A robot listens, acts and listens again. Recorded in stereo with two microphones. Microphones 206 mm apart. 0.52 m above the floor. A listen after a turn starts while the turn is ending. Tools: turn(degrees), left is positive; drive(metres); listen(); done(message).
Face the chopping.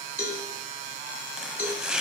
turn(degrees=-30)
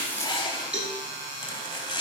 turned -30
turn(degrees=25)
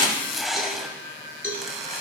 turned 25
done("Found it: chopping, straight ahead.")